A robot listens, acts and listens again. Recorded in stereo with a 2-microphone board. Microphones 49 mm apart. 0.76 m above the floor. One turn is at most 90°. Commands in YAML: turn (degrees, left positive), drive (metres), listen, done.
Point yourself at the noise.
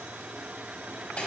turn: 30
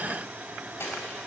turn: 90
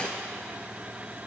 turn: 30
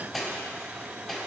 done: "Facing the cutlery clinking, 2 to 4 m away."